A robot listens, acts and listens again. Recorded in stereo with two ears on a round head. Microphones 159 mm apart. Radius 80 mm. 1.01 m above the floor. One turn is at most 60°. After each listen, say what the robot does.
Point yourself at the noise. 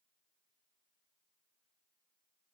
Keep listening.
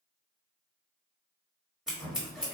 Turn 30° right.
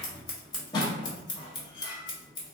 Turn 25° left.
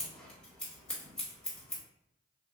Facing the scissors.